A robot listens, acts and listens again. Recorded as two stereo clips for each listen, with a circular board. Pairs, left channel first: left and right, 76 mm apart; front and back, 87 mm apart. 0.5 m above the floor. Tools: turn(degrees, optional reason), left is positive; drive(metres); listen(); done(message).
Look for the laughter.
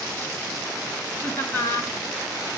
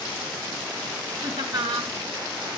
turn(degrees=150, reason="The laughter: 150° left.")
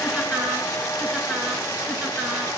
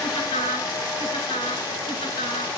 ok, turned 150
done("Facing the laughter.")